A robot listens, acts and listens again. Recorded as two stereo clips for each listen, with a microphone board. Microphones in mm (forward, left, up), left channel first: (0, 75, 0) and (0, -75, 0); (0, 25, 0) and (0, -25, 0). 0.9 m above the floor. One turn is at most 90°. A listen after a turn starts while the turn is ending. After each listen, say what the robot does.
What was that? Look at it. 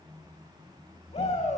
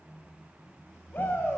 Turn 45° left.
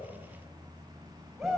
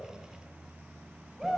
Facing the shout.